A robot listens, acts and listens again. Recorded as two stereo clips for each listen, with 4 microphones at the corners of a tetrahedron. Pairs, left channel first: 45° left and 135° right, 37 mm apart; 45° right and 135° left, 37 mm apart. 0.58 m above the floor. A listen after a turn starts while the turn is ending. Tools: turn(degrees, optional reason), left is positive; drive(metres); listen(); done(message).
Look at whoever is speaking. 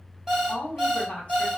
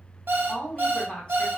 turn(degrees=10, reason="The woman speaking: 10° left.")
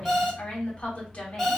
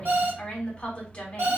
done("Found it: a woman speaking, straight ahead, 1 to 2 m away.")